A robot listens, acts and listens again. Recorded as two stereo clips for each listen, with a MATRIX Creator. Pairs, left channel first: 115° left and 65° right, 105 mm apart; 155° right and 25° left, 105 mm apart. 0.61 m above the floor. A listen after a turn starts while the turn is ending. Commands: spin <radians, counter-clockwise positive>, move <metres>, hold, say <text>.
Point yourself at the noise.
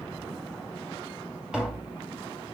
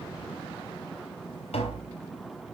spin -2.62
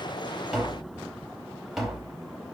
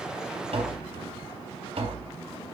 spin 0.35
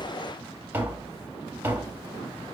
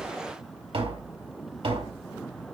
say Found it: tapping, straight ahead.